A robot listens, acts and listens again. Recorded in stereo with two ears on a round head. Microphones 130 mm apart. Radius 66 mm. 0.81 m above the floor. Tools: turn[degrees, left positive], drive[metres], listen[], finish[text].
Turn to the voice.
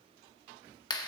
Action: listen[]
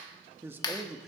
Action: turn[30]
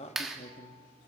Thought: So it is at 120° left.
Action: turn[120]
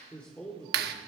Action: finish[Found it: a man speaking, straight ahead.]